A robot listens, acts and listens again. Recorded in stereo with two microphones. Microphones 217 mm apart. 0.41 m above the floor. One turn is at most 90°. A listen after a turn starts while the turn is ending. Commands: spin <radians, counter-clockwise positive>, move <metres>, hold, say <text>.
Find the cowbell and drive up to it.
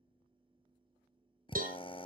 spin -0.61
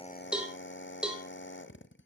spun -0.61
move 1.0
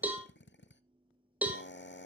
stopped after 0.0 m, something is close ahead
say Something is in my way. I am facing the cowbell but have not reached it.